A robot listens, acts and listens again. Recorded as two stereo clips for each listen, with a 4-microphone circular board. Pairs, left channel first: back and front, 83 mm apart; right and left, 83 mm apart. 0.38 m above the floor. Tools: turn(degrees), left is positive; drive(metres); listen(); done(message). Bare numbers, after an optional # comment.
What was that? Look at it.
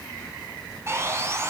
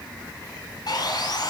# The sawing: 55° right.
turn(-55)
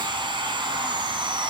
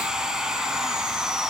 done("Found it: sawing, straight ahead.")